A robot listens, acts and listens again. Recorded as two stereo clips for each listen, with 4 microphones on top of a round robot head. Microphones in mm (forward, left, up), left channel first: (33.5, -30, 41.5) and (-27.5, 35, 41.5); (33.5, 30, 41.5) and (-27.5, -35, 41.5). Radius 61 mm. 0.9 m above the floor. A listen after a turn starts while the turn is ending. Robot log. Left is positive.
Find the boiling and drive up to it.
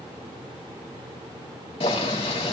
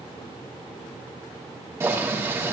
note: The boiling: 70° right.
cmd yaw -70
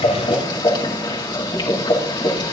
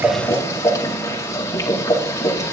note: The boiling is now 10° right.
cmd yaw -10
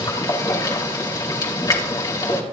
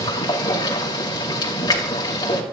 cmd fwd 1.0
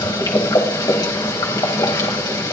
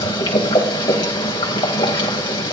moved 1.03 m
cmd fwd 1.0
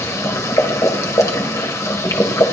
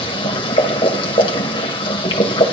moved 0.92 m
note: The boiling is now 10° left.
cmd yaw +10
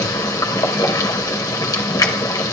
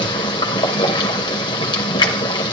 cmd fwd 1.0
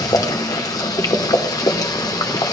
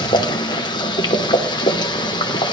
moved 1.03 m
cmd fwd 1.0
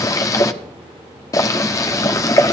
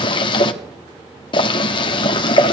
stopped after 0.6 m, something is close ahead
note: The boiling is now 10° left.
cmd yaw +10
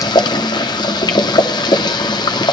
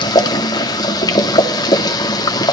end: Arrived at the boiling, straight ahead.